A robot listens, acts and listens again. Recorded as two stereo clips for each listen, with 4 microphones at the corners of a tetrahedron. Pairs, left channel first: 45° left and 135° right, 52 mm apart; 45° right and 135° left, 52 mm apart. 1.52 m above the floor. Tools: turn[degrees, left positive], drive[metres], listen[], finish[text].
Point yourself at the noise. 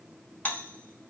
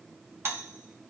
Thought: The doorbell: 105° left.
Action: turn[105]
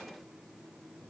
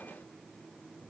Action: listen[]
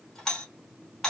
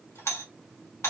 Thought: The doorbell is now 30° right.
Action: turn[-30]
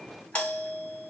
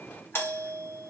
Thought: The doorbell is now 15° right.
Action: turn[-15]
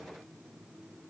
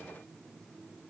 Action: listen[]
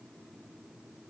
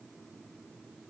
Action: listen[]
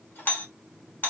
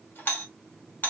Action: finish[Facing the doorbell, 1 to 2 m away.]